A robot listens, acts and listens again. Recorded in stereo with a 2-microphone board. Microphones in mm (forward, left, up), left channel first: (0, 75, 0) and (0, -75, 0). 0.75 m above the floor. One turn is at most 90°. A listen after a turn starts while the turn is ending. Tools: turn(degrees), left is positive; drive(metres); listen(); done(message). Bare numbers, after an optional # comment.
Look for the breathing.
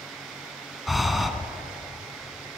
turn(30)
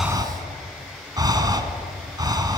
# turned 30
# So it is at 30° right.
turn(-30)
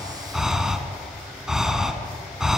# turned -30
done("Found it: breathing, straight ahead.")